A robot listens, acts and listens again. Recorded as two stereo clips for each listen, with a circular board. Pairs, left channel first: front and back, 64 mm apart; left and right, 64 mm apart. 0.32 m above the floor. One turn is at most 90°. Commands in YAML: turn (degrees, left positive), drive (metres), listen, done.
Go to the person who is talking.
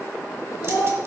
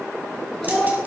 drive: 1.0
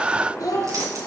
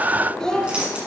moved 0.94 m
turn: 10
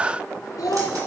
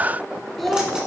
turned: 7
drive: 1.0
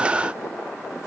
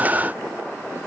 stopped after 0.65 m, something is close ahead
listen: true
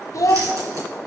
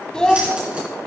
turn: 15
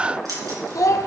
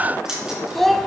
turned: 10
done: "I am next to the child speaking."